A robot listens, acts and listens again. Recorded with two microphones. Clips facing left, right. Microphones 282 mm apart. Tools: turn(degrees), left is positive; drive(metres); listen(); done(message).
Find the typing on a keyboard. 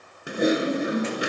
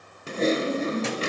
turn(degrees=30)
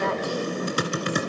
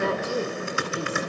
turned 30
turn(degrees=140)
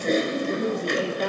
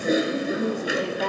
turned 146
done("Found it: typing on a keyboard, straight ahead, 1 to 2 m away.")